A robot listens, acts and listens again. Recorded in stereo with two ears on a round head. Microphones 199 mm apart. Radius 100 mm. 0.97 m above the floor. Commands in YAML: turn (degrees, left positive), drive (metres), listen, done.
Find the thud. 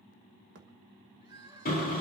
turn: -50
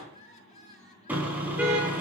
listen: true
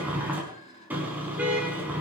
done: "I heard a thud, but can't make it out now. It was about straight ahead or 80° right."